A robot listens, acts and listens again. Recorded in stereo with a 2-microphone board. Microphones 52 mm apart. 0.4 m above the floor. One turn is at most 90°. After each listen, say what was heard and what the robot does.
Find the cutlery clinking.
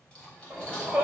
The cutlery clinking: about 20° left or 160° left. Turn 20° left.
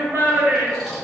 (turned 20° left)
Keep listening.
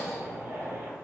Keep listening.
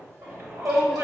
I heard cutlery clinking, but can't make it out now. It was about straight ahead or 140° left.